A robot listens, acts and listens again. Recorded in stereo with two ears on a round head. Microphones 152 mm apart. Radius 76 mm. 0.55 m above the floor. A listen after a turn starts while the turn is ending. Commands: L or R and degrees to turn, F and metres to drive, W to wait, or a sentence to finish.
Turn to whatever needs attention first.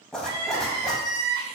R65
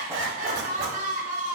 R50
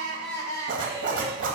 L20
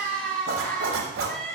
Found it: crying, straight ahead.